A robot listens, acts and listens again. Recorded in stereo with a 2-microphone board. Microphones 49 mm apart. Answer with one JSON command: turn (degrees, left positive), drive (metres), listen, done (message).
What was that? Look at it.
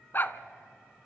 {"turn": 45}
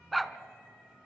{"done": "Found it: a dog barking, straight ahead."}